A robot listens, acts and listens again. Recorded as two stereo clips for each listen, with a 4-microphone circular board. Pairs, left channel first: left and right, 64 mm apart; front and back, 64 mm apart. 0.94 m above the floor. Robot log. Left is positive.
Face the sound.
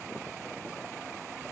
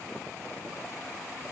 cmd idle
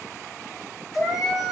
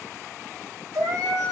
note: The cat meowing: 170° right.
cmd yaw -170
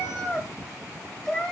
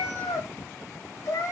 note: The cat meowing is now 10° left.
cmd yaw +10
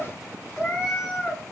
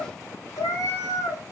note: The cat meowing is now 10° left.
cmd yaw +10
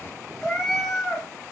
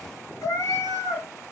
end: Facing the cat meowing.